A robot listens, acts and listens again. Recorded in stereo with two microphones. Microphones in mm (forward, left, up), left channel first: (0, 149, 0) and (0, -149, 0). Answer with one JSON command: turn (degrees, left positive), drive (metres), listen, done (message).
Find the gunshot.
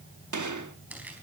{"turn": -90}
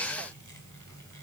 {"done": "I heard a gunshot from this way, but can't make it out now."}